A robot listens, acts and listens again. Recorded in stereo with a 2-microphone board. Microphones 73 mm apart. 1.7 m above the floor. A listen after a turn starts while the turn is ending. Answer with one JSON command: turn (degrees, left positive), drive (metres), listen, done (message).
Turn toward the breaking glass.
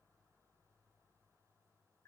{"listen": true}
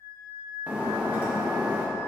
{"turn": -20}
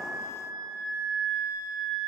{"listen": true}
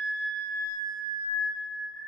{"done": "I heard breaking glass, but can't make it out now. It was about straight ahead or 140° right."}